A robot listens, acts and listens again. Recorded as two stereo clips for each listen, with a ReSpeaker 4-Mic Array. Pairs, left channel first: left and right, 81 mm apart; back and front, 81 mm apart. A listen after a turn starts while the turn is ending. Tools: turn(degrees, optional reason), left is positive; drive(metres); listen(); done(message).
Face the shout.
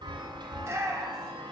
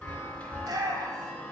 turn(degrees=-35, reason="The shout: 35° right.")
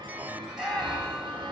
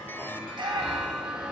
turn(degrees=-10, reason="The shout is now 10° right.")
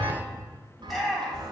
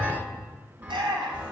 done("Found it: a shout, straight ahead, 2 to 4 m away.")